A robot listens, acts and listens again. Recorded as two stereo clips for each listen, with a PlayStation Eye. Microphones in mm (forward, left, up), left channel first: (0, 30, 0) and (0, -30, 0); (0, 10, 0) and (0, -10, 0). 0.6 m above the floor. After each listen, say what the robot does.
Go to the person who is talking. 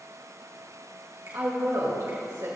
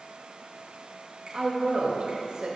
Turn 75° right.
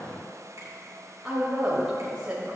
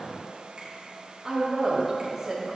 Turn 20° right.
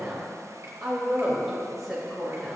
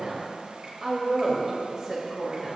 Drive 1.0 m forward.
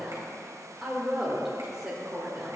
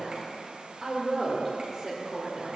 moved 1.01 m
Turn 10° right.
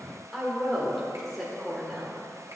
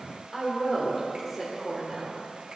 Drive 1.0 m forward.
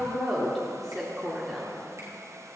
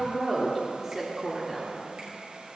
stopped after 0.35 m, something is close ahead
I am next to the woman speaking.